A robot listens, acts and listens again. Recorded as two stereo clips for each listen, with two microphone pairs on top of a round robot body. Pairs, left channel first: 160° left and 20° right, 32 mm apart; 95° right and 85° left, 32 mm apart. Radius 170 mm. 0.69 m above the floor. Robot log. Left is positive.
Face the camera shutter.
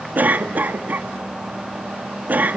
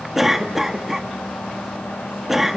cmd idle
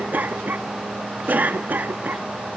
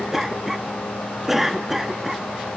cmd idle
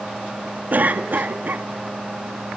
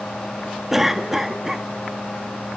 end: I can't make out a camera shutter to turn to.